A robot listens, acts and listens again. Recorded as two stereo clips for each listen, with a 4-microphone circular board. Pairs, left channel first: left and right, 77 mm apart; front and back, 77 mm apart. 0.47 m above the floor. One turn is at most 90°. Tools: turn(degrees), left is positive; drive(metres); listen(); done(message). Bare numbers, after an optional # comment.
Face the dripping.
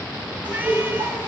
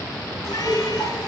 # The dripping: 100° right.
turn(-90)
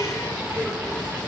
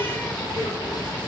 # Nothing new. It was at 10° right.
turn(-10)
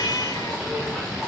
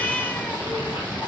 listen()
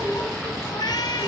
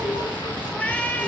done("Found it: dripping, straight ahead.")